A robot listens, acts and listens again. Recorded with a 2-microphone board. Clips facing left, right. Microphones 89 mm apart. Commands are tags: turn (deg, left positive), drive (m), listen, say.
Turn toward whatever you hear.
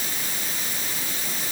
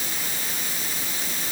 <listen/>
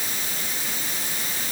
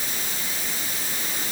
<listen/>
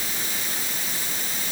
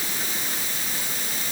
<say>I can't make out anything.</say>